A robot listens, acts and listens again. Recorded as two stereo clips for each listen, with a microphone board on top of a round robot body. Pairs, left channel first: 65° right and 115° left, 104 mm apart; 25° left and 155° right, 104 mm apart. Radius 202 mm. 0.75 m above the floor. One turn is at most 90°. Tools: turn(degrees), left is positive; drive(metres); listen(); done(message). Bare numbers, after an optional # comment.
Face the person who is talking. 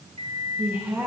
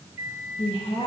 # The woman speaking: 45° left.
turn(45)
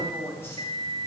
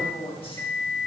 done("Found it: a woman speaking, straight ahead, 2 to 4 m away.")